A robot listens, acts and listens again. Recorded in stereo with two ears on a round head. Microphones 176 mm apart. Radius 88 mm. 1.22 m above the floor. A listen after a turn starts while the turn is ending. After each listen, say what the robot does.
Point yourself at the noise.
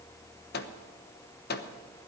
Turn 55° left.
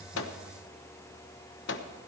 Turn 65° left.
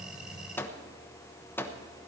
Turn 10° left.
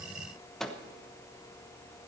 Facing the microwave, 1 to 2 m away.